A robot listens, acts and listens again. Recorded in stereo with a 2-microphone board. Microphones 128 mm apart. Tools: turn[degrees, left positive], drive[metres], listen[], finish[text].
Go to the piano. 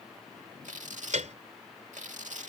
Thought: The piano: about 65° right or 115° right.
Action: turn[-65]
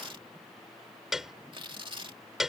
Action: drive[1.0]
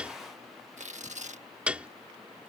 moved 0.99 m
Thought: The piano is now 10° right.
Action: turn[-10]
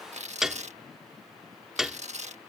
Action: drive[1.0]
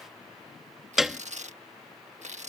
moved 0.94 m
Action: drive[1.0]
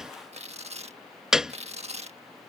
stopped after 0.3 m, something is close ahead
Action: finish[Arrived at the piano, straight ahead.]